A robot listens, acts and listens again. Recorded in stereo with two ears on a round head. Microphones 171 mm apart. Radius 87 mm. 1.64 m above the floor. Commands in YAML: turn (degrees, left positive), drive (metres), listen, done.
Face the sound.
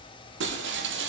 turn: -70
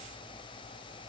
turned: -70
listen: true
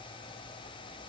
done: "I heard breaking glass, but can't make it out now. It was about straight ahead or 40° right."